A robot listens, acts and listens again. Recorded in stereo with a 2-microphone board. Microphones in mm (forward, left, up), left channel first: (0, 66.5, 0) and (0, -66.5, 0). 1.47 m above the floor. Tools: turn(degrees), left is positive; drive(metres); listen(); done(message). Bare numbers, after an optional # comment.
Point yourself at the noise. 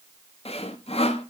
# The sawing: about 50° left or 130° left.
turn(50)
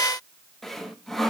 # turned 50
done("Found it: sawing, straight ahead.")